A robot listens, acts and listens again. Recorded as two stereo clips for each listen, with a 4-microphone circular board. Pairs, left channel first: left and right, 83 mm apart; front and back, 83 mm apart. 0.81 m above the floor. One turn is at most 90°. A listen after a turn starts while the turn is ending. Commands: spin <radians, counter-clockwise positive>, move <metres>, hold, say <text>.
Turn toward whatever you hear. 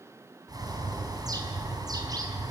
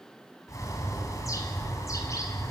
spin -0.87
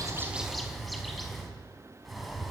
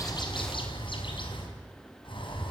say Facing the bird, over 4 m away.